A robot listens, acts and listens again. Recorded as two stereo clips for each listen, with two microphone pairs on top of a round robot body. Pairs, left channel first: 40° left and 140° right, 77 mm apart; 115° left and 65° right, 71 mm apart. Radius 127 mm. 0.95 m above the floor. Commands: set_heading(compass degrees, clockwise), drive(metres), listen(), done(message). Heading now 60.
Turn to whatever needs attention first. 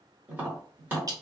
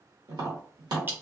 listen()
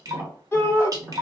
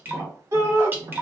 set_heading(85)
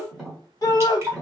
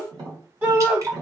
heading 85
done("Found it: a shout, straight ahead.")